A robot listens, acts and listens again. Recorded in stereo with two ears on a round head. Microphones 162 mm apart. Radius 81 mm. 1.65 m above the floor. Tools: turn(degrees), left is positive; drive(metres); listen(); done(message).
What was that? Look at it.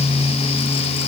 listen()
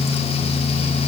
listen()
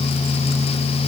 done("I can't make out anything.")